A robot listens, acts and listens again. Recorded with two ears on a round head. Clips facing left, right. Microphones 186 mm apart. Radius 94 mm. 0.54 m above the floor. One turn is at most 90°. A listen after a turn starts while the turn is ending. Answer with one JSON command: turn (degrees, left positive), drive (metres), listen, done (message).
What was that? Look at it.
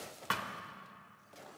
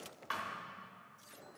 {"turn": 65}
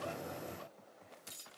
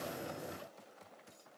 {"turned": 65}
{"listen": true}
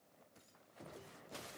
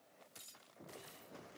{"done": "I heard a thud, but can't make it out now. It was about straight ahead or 50° left."}